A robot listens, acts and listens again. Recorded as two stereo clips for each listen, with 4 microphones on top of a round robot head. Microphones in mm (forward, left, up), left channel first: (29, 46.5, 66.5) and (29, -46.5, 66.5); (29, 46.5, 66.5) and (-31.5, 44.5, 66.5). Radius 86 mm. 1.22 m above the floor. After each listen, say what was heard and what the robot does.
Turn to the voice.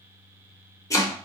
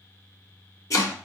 Keep listening.
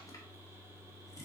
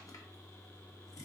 Keep listening.
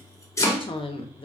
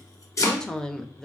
The woman speaking: 80° left. Turn 80° left.
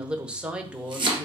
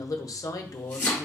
The woman speaking is now 10° right. Turn 10° right.
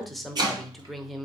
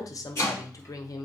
Found it: a woman speaking, straight ahead, under 1 m away.